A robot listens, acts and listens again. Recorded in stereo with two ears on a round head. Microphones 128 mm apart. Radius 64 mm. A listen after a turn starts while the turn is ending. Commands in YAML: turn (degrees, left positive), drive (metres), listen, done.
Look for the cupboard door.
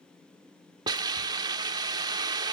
listen: true
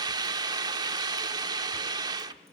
listen: true
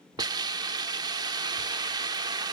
done: "I can't make out a cupboard door to turn to."